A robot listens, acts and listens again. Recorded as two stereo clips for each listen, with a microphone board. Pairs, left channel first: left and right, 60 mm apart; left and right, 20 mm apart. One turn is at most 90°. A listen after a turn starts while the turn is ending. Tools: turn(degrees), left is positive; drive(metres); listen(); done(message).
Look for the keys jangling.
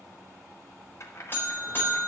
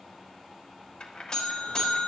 turn(degrees=50)
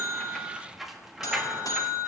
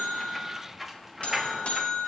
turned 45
turn(degrees=-10)
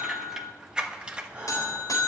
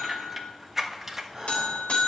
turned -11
turn(degrees=-20)
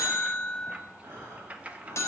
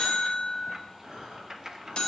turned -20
turn(degrees=-25)
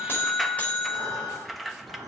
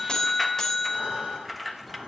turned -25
done("Facing the keys jangling, 1 to 2 m away.")